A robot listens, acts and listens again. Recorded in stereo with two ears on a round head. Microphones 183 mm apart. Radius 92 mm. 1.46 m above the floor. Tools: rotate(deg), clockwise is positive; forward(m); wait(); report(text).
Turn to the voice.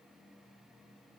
wait()
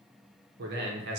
rotate(55)
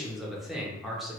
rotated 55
report("Facing the man speaking.")